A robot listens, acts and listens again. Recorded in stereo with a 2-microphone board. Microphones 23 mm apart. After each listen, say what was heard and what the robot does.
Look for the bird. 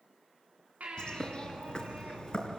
The bird: about 40° left or 140° left. Turn 40° left.
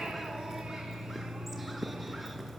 Facing the bird, 2 to 4 m away.